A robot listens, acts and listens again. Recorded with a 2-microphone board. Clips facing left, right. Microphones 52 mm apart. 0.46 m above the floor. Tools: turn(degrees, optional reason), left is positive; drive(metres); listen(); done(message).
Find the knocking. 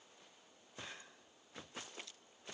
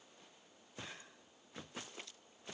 listen()
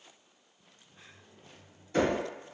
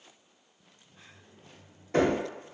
turn(degrees=-60, reason="The knocking: about 60° right or 120° right.")
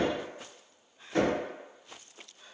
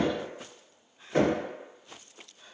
turn(degrees=-35, reason="So it is at 35° right.")
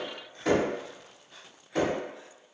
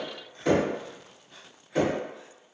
done("Found it: knocking, straight ahead, 1 to 2 m away.")